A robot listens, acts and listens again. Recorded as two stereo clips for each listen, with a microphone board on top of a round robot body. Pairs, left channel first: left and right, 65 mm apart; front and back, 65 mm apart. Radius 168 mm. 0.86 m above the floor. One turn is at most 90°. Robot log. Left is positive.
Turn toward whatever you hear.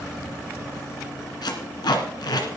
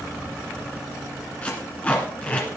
note: The tape being pulled: 70° left.
cmd yaw +70
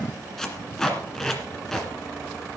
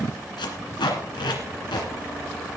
end: Found it: tape being pulled, straight ahead.